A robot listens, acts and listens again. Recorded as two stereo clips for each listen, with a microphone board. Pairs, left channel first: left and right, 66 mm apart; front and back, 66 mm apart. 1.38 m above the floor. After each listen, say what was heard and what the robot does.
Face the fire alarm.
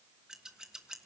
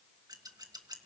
Keep listening.
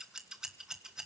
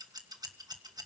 Keep listening.
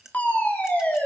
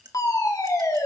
The fire alarm: 20° left. Turn 20° left.
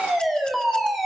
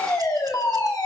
Facing the fire alarm, over 4 m away.